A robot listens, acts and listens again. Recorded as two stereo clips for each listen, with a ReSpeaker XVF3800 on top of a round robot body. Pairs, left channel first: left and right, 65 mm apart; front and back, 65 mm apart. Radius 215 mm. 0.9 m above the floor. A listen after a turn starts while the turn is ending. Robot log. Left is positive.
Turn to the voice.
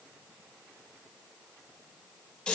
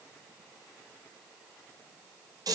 cmd idle
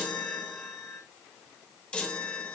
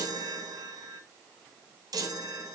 cmd idle
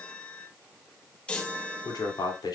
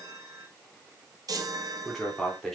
note: The man speaking: 85° left.
cmd yaw +85
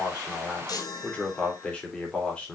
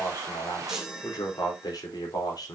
note: The man speaking is now 15° left.
cmd yaw +15
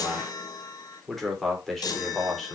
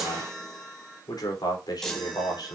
end: Found it: a man speaking, straight ahead, over 4 m away.